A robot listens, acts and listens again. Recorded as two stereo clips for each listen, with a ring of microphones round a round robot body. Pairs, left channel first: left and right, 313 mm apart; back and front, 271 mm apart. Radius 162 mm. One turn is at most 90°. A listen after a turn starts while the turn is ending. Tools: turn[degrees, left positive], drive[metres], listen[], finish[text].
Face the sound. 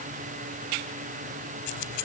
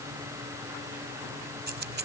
Thought: The keys jangling: 50° left.
Action: turn[50]
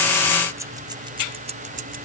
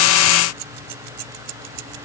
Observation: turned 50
Thought: The keys jangling is now 25° right.
Action: turn[-25]
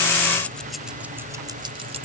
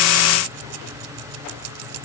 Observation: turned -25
Thought: The keys jangling is now 20° right.
Action: turn[-20]
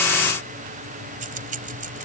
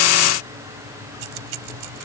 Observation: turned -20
Thought: The keys jangling is now 25° right.
Action: turn[-25]
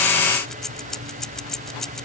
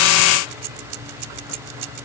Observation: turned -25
Action: finish[Facing the keys jangling.]